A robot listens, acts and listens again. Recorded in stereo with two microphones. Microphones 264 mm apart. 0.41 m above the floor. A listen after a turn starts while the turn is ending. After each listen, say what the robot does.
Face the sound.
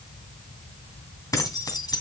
Turn 15° left.
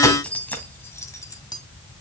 Turn 30° left.
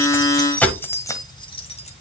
Turn 20° left.
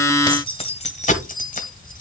Turn 30° left.
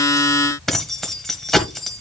Found it: keys jangling, straight ahead, 1 to 2 m away.